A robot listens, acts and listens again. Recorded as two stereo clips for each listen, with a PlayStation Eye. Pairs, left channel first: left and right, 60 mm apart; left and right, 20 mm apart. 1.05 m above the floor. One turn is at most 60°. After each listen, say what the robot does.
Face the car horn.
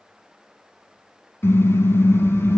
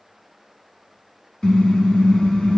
Turn 40° left.
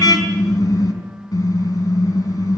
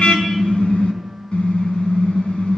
Turn 60° left.
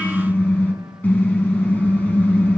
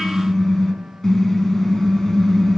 Turn 30° left.
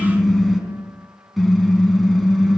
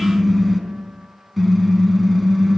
Found it: a car horn, straight ahead, over 4 m away.